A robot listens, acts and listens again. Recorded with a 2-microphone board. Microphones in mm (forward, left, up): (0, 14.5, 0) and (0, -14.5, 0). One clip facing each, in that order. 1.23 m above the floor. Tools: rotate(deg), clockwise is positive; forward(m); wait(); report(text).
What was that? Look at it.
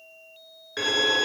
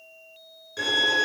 rotate(-30)
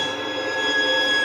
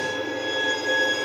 rotate(-110)
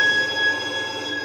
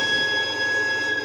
rotate(-15)
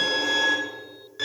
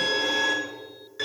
report("Facing the violin.")